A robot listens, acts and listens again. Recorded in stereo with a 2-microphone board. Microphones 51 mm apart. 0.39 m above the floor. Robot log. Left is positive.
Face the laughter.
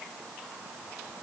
cmd idle
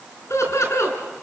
note: The laughter: about 70° left or 110° left.
cmd yaw +70
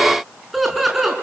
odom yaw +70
end: Found it: laughter, straight ahead, over 4 m away.